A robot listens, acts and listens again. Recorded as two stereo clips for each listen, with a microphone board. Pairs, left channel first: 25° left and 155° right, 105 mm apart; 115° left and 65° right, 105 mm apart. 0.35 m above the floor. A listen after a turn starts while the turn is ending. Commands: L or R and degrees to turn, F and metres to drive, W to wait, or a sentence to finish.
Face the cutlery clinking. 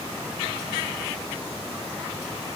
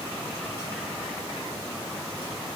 W
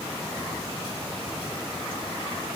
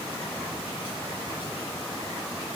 W
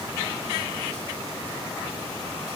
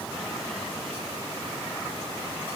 I can't make out cutlery clinking to turn to.